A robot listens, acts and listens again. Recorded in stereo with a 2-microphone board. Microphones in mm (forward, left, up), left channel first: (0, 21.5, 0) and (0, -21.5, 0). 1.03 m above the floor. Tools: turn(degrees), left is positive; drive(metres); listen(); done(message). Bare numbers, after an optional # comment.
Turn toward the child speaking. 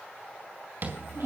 # The child speaking: about 65° right or 115° right.
turn(-65)
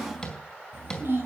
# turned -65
# So it is at 50° right.
turn(-50)
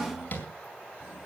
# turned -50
# The child speaking is now 20° right.
turn(-20)
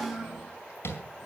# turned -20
done("Found it: a child speaking, straight ahead.")